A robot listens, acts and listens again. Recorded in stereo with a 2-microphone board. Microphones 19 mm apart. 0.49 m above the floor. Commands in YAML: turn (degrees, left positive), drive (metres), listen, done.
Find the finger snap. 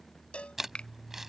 turn: 55
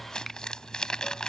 listen: true
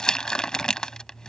listen: true
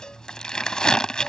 done: "I heard a finger snap, but can't make it out now. It was about straight ahead or 70° left."